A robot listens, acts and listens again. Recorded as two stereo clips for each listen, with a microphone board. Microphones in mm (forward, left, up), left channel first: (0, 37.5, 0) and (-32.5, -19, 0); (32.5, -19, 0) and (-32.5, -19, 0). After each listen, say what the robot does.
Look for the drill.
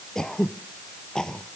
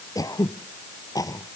Keep listening.
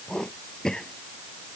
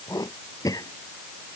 Keep listening.
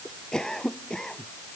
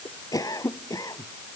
I can't make out a drill, only throat clearing.